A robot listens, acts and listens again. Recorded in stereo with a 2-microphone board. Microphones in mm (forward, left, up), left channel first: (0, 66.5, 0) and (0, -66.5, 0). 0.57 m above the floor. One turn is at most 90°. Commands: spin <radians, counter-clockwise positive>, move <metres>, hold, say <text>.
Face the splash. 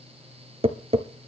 hold
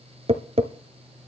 hold
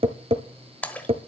spin 0.52
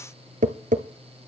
hold
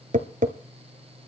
say I heard a splash, but can't make it out now. It was about 20° right or 140° left.